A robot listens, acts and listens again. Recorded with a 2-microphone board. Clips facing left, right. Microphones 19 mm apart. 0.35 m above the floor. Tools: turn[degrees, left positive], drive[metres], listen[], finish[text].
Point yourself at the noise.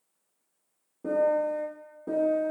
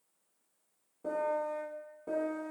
Action: turn[30]
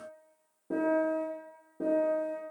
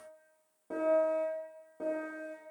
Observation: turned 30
Thought: So it is at 25° right.
Action: turn[-25]
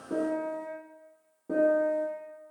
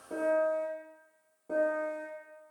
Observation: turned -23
Action: finish[Facing the piano, 1 to 2 m away.]